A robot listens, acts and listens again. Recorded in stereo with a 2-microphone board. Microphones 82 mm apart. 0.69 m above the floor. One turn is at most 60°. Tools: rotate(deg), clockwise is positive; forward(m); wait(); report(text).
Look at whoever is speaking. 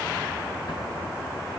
wait()
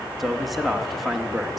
rotate(-30)
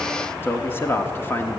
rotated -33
rotate(-60)
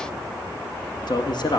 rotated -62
rotate(-60)
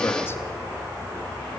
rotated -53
rotate(-35)
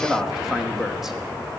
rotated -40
report("Found it: a man speaking, straight ahead.")